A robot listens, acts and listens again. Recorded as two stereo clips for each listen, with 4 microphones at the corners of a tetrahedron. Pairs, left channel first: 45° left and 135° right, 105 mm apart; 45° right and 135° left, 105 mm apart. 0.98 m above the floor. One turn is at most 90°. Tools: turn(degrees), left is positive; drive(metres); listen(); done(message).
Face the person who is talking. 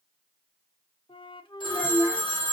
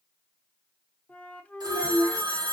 turn(degrees=90)
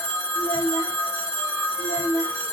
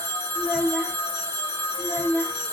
turn(degrees=50)
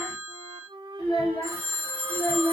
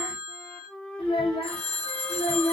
done("Found it: a child speaking, straight ahead.")